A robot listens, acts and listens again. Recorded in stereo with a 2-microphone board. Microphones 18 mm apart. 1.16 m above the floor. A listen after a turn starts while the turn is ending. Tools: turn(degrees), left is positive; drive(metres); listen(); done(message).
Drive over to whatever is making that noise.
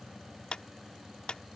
turn(degrees=60)
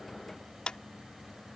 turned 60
turn(degrees=55)
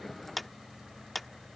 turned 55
drive(metres=1.0)
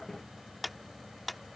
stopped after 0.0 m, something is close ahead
done("Something is in my way. I am facing the clap but have not reached it.")